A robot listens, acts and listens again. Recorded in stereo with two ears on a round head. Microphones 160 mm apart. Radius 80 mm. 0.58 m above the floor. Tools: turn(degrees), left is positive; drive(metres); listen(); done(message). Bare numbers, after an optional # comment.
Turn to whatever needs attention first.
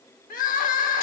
# The crying: about 45° left or 135° left.
turn(45)
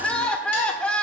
done("Found it: crying, straight ahead.")